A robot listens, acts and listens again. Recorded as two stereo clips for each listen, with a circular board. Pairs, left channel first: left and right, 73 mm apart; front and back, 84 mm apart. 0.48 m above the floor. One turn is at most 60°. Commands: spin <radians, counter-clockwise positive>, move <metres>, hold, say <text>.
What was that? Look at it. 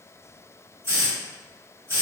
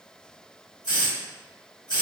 spin -0.70
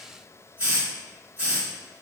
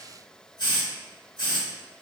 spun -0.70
spin -0.44
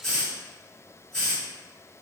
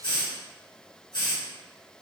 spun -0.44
say Found it: a hiss, straight ahead, 1 to 2 m away.